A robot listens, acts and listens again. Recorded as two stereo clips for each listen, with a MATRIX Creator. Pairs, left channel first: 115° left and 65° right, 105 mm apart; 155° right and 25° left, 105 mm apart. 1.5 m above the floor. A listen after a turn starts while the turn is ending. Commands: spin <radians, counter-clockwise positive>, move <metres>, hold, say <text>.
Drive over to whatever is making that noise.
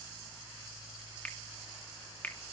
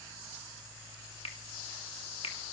spin -3.05
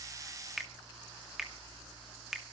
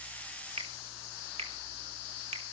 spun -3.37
spin 0.35
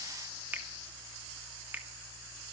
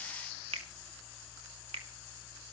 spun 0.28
move 1.0
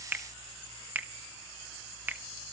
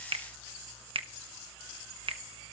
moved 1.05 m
move 1.0
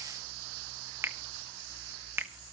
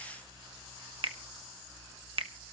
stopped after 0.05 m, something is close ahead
say Arrived at the finger snap, straight ahead.